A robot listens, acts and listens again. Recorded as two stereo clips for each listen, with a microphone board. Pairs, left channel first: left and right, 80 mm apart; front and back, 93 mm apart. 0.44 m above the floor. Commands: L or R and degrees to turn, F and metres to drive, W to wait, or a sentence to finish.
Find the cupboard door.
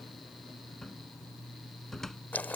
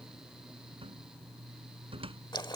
L175
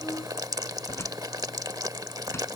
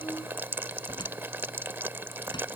W
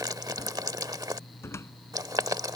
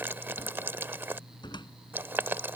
L35
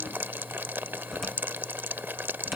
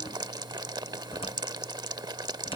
W
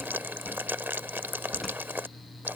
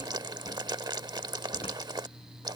W
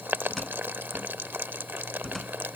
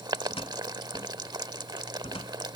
Facing the cupboard door.